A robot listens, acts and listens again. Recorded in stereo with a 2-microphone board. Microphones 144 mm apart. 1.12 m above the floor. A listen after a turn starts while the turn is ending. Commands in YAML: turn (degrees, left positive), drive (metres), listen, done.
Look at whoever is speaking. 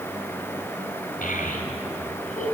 turn: 70
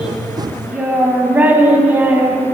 turn: -15
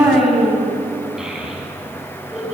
done: "Found it: a child speaking, straight ahead, over 4 m away."